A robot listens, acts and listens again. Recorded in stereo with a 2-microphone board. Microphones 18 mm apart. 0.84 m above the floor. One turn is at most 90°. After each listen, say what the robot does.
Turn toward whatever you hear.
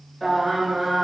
Turn 30° left.
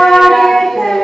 Turn 90° left.
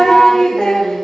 Turn 65° left.
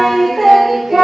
Found it: singing, straight ahead, 2 to 4 m away.